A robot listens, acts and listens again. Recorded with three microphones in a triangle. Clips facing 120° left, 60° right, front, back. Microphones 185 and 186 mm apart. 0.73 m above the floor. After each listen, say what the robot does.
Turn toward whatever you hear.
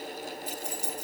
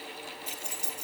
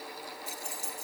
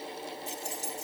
Turn 155° right.
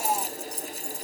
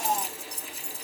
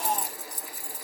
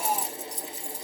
Turn 35° right.
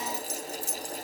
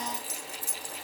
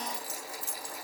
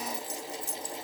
Turn 20° right.
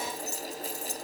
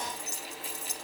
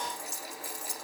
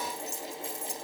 Found it: keys jangling, straight ahead.